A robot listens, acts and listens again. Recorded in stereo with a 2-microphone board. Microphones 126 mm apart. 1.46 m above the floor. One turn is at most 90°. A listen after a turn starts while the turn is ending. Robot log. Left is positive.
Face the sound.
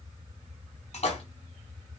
note: The splash: about 55° left or 125° left.
cmd yaw +55
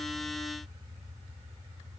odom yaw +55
cmd idle
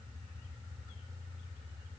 end: I heard a splash, but can't make it out now. It was about straight ahead or 70° left.